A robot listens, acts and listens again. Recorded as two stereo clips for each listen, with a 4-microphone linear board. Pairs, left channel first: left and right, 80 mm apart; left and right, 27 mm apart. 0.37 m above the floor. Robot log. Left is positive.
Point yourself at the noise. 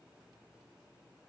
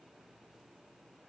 cmd idle
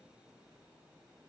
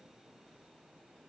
cmd idle
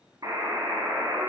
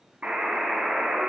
note: The buzzer: about 50° right or 130° right.
cmd yaw -50
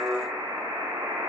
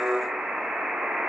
note: So it is at 75° right.
cmd yaw -75
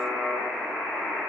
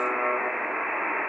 end: Facing the buzzer.